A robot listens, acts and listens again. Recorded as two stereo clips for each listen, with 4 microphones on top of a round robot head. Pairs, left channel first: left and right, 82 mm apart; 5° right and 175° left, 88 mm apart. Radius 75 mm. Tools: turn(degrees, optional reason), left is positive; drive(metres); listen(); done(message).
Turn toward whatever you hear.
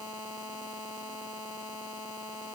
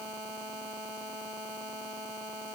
listen()
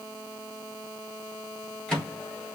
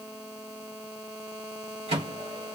turn(degrees=170, reason="The microwave: 170° left.")
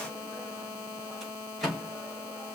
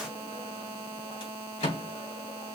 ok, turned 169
done("Facing the microwave.")